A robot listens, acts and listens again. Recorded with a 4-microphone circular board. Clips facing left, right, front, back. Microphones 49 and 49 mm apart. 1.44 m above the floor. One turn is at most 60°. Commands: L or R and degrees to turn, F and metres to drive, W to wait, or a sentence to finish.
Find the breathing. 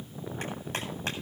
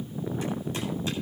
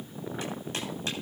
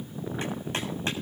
W
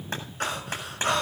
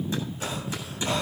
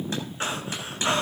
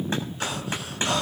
L60
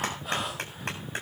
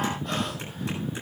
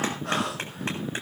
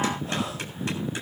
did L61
Facing the breathing.